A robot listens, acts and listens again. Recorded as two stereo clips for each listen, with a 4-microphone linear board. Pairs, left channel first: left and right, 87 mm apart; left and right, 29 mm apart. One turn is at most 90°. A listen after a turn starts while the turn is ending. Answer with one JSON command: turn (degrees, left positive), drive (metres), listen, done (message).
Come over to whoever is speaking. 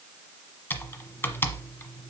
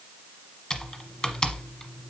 {"listen": true}
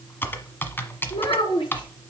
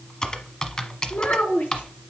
{"turn": 75}
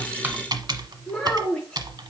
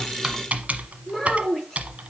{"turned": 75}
{"turn": 15}
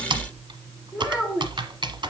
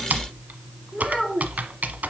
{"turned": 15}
{"drive": 1.0}
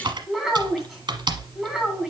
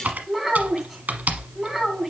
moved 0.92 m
{"drive": 1.0}
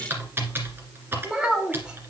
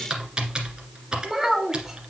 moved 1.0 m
{"turn": -10}
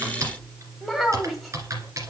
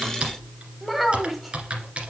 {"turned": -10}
{"drive": 1.0}
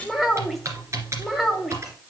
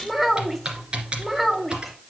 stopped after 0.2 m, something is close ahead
{"done": "Arrived at the child speaking, straight ahead."}